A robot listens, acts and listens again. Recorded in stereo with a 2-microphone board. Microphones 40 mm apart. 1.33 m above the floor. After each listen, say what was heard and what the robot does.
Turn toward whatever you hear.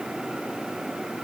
Keep listening.
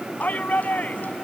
The shout: about 40° left or 140° left. Turn 40° left.
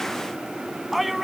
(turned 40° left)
Facing the shout.